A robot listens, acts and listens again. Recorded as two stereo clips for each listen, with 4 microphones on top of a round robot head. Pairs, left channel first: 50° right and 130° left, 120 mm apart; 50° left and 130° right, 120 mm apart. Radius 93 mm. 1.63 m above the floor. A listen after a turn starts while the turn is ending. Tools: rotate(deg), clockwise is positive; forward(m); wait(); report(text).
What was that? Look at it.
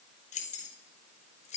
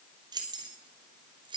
rotate(80)
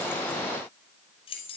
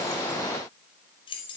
report("Facing the keys jangling.")